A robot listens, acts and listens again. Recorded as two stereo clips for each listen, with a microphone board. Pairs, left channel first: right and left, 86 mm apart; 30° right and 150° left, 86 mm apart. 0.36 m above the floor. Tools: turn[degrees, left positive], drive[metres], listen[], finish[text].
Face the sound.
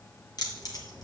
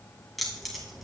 Thought: The keys jangling: 125° right.
Action: turn[-125]
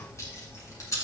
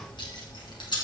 Thought: The keys jangling is now 40° right.
Action: turn[-40]
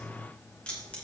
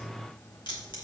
Thought: The keys jangling is now 15° right.
Action: turn[-15]
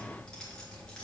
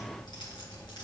Thought: The keys jangling is now 10° right.
Action: turn[-10]
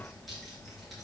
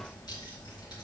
Action: finish[Facing the keys jangling.]